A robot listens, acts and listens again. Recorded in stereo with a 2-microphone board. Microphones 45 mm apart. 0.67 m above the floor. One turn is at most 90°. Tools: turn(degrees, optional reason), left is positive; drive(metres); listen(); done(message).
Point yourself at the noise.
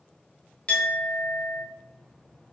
turn(degrees=25, reason="The clink: about 25° left or 155° left.")
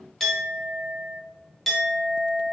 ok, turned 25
done("Facing the clink, under 1 m away.")